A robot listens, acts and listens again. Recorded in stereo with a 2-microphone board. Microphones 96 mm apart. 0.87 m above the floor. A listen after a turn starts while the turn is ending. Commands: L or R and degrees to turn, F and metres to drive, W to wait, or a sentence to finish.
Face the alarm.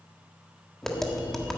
W
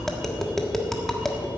W
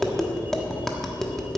I can't make out an alarm to turn to.